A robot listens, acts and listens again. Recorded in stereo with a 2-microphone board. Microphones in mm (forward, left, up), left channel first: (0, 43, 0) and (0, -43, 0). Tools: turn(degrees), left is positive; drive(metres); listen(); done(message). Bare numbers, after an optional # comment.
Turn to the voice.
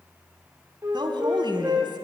# The woman speaking: about 60° right or 120° right.
turn(-60)
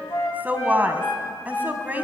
# So it is at 25° right.
turn(-25)
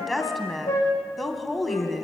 done("Found it: a woman speaking, straight ahead, 2 to 4 m away.")